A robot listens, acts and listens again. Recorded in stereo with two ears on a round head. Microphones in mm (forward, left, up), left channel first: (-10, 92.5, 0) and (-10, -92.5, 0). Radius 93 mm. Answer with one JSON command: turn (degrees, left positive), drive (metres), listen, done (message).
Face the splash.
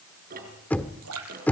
{"turn": -90}
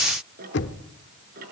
{"done": "Facing where the splash came from. I can't hear it now."}